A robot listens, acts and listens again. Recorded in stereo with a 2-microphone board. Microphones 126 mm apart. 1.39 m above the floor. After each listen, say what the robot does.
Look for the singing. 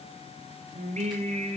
Turn 70° right.
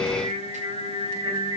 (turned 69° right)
Turn 40° right.
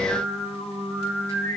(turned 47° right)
Facing the singing, over 4 m away.